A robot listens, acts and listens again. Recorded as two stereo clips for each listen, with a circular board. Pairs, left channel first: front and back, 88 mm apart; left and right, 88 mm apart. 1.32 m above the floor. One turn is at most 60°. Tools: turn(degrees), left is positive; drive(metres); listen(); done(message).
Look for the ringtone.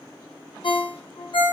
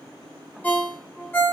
turn(degrees=20)
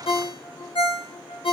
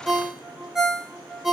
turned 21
done("Found it: a ringtone, straight ahead, under 1 m away.")